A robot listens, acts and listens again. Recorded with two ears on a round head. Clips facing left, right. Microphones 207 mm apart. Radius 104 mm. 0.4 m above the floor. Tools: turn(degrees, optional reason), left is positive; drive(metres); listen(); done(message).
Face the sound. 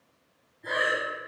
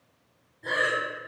turn(degrees=-55, reason="The breathing: about 55° right or 125° right.")
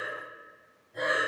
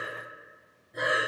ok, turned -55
turn(degrees=-30, reason="So it is at 30° right.")
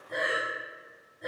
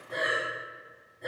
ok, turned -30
done("Facing the breathing.")